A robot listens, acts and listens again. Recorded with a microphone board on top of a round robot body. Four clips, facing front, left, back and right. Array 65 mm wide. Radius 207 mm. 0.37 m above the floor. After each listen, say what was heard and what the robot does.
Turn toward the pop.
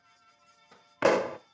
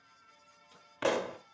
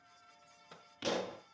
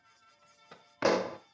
The pop: 10° right. Turn 10° right.
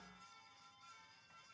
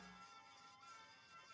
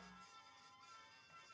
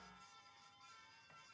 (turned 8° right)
Facing where the pop came from. I can't hear it now.